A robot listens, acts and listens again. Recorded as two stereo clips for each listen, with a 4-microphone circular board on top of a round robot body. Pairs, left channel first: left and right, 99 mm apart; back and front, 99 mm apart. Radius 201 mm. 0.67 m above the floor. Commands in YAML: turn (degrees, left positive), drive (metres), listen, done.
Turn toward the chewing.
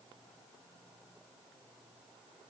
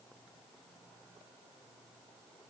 listen: true
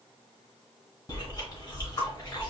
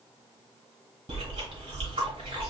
turn: 35
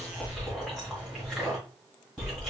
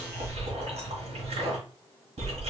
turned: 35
done: "Found it: chewing, straight ahead."